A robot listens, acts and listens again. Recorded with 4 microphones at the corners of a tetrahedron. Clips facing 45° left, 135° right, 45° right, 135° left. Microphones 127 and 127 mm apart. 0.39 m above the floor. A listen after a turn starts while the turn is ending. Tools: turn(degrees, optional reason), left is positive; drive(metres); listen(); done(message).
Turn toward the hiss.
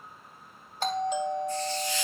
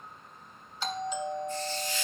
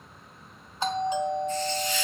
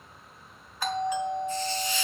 turn(degrees=55, reason="The hiss: 55° left.")
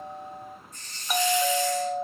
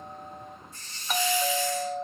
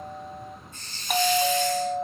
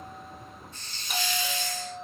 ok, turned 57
done("Facing the hiss, over 4 m away.")